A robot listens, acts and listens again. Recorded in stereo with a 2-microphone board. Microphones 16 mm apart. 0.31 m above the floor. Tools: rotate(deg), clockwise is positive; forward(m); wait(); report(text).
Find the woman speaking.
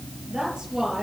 rotate(50)
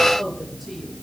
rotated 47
report("Facing the woman speaking, over 4 m away.")